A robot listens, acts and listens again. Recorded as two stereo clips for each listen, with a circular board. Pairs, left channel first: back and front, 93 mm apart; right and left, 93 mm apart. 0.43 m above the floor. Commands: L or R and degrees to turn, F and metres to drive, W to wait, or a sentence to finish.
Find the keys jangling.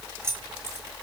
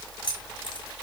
R65
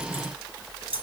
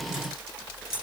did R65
Facing the keys jangling, over 4 m away.